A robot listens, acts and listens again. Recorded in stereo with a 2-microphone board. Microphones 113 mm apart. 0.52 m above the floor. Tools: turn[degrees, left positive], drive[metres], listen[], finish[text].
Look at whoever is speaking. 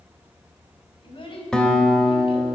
Thought: The child speaking: about 50° left or 130° left.
Action: turn[50]
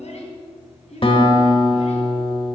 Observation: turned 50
Thought: So it is at 70° left.
Action: turn[70]
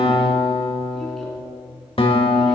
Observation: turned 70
Action: listen[]
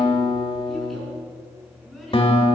Action: finish[Found it: a child speaking, straight ahead.]